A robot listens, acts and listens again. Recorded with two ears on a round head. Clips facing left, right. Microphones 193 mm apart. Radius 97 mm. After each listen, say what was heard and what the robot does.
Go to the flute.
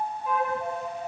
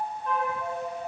Turn 30° left.
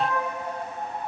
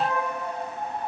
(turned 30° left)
So it is at 25° right. Turn 25° right.
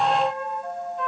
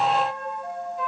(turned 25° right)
Drive 1.0 m forward.
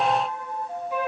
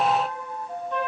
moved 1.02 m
Drive 1.0 m forward.
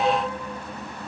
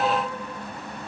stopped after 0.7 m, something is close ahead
The flute is now 15° left. Turn 15° left.
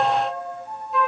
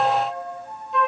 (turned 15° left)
Arrived at the flute, straight ahead.